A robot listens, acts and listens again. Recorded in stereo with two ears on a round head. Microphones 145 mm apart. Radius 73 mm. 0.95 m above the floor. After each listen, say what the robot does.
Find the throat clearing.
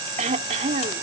Turn 45° right.
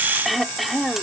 Facing the throat clearing.